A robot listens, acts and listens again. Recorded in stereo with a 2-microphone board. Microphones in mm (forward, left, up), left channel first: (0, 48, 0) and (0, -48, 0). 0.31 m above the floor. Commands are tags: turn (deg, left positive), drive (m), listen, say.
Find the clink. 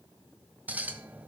<turn deg="-15"/>
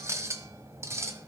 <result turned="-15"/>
<turn deg="-150"/>
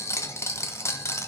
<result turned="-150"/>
<turn deg="35"/>
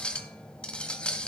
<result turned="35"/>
<turn deg="15"/>
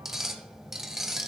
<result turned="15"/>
<say>Found it: a clink, straight ahead.</say>